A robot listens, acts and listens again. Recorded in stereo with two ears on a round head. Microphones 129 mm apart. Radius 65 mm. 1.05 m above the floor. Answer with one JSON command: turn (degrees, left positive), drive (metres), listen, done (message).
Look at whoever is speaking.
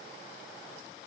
{"listen": true}
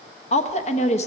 {"turn": 50}
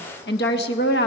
{"turn": 80}
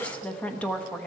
{"turn": 10}
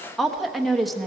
{"done": "Facing the woman speaking, 1 to 2 m away."}